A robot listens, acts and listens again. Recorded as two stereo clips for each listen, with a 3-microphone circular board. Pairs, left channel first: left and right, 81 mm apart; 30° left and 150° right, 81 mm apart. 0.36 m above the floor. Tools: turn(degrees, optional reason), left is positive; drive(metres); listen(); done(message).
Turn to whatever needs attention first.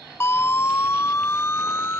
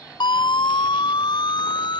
turn(degrees=35, reason="The siren: 35° left.")
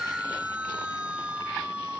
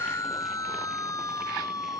turn(degrees=-15, reason="The siren is now 15° right.")
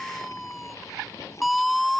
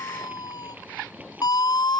done("Facing the siren.")